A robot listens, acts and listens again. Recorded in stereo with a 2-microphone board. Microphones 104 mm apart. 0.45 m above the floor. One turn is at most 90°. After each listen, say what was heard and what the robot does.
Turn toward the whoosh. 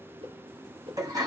The whoosh: about 70° right or 110° right. Turn 70° right.
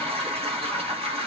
Keep listening.
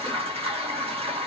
Keep listening.
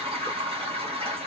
I heard a whoosh, but can't make it out now. It was about straight ahead or 40° right.